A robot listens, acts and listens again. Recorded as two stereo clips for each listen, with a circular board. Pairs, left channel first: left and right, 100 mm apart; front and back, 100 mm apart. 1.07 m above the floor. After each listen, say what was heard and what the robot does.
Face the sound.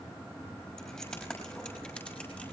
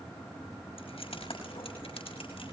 The keys jangling: 15° left. Turn 15° left.
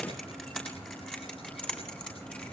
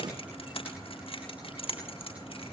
The keys jangling is now 10° left. Turn 10° left.
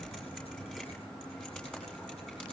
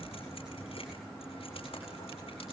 The keys jangling is now 10° left. Turn 10° left.
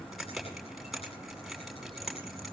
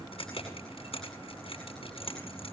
Found it: keys jangling, straight ahead, over 4 m away.